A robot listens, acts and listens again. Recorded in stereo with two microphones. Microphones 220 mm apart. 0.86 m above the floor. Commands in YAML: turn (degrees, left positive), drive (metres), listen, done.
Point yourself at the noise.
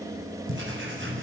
turn: -60
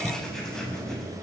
done: "Facing the writing, over 4 m away."